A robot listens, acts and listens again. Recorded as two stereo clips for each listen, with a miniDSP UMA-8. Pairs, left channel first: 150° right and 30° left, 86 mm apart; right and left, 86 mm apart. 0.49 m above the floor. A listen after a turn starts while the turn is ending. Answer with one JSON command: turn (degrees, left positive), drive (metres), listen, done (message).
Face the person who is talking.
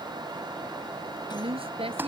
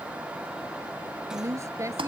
{"turn": 35}
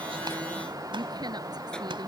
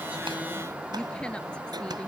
{"listen": true}
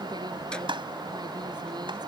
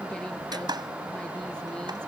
{"listen": true}
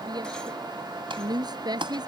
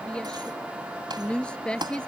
{"turn": -10}
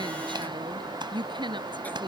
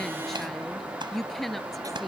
{"done": "Found it: a woman speaking, straight ahead."}